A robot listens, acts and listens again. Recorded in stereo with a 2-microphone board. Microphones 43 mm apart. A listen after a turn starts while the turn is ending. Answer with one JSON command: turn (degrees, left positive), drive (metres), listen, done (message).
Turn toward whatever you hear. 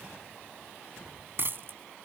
{"turn": -55}
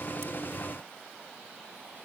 {"listen": true}
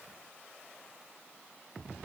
{"done": "I heard a dropped coin, but can't make it out now. It was about straight ahead or 70° right."}